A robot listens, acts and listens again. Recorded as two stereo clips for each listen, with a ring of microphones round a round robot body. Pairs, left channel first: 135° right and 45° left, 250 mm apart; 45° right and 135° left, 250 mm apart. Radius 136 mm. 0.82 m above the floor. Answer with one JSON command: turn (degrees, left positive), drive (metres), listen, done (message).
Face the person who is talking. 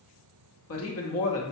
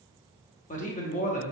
{"turn": -105}
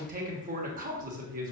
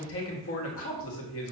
{"turn": -10}
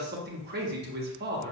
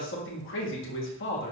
{"done": "Found it: a man speaking, straight ahead, 1 to 2 m away."}